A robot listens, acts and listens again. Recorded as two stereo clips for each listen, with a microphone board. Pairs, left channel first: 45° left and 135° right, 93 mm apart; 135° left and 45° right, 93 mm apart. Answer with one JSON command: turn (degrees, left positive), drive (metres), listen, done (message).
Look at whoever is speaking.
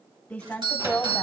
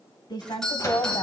{"turn": 125}
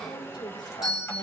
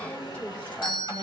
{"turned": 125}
{"turn": 65}
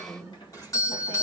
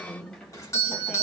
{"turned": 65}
{"turn": 30}
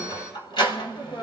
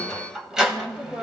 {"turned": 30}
{"turn": 25}
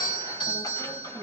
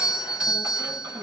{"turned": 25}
{"listen": true}
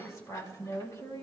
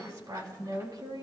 {"turn": -10}
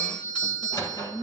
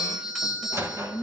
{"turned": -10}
{"done": "Found it: a woman speaking, straight ahead, 2 to 4 m away."}